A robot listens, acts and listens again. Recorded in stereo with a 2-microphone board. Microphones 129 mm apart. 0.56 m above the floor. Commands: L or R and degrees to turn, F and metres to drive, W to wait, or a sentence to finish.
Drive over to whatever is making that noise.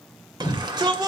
R35
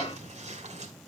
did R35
W
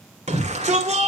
R105
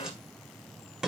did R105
F1.0
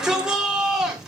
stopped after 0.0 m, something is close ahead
Blocked. The shout is further on, straight ahead.